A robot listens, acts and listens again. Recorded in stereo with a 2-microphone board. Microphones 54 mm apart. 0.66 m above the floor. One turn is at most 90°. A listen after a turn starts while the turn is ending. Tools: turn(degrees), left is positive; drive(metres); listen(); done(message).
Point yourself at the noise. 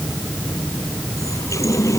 turn(degrees=90)
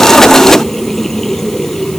done("Facing the running tap.")